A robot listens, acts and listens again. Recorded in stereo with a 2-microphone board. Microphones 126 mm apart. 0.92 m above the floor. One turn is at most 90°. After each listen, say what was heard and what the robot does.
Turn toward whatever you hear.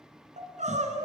The crying: about 70° right or 110° right. Turn 70° right.
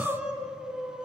So it is at 10° right. Turn 10° right.
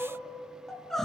Found it: crying, straight ahead, 2 to 4 m away.